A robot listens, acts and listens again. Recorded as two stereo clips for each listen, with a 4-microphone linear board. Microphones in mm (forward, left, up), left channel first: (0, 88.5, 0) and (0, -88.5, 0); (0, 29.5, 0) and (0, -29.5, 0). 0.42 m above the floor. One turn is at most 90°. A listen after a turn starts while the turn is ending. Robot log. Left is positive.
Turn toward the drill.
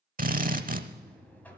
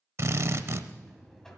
note: The drill: about 50° right or 130° right.
cmd yaw -50
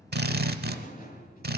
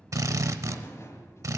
note: So it is at 75° right.
cmd yaw -75
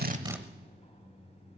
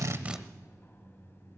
cmd idle
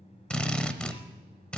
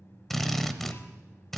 end: Facing the drill.